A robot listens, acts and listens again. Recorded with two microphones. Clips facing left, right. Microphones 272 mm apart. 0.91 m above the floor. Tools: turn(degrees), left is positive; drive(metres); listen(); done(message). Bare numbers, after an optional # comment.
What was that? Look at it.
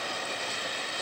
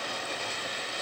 listen()
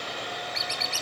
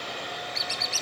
# The squeak: about 65° left or 115° left.
turn(65)
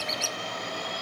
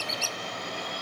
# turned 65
# So it is at 25° left.
turn(25)
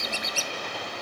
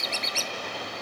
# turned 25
# The squeak is now 15° left.
turn(15)
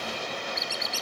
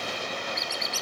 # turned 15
done("Facing the squeak.")